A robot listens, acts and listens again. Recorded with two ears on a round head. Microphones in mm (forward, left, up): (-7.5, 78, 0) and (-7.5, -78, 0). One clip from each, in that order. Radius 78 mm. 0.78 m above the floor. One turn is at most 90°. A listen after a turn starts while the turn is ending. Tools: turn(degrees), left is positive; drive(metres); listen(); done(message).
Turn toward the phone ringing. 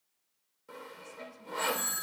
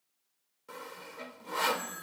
turn(degrees=90)
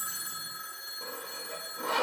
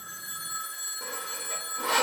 turn(degrees=-15)
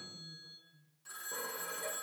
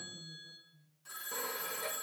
done("Found it: a phone ringing, straight ahead, over 4 m away.")